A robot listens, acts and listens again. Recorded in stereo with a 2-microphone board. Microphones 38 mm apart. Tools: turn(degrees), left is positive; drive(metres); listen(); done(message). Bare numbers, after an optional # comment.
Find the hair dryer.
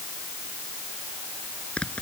listen()
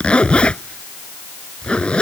listen()
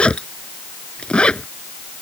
done("I can't make out a hair dryer, only a zipper.")